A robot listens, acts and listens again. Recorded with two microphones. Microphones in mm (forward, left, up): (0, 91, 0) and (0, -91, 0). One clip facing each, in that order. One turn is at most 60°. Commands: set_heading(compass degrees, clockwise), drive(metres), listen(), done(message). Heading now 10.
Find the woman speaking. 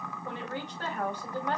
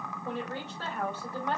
set_heading(340)
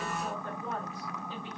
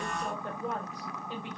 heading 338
set_heading(353)
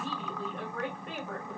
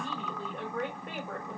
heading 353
done("Found it: a woman speaking, straight ahead.")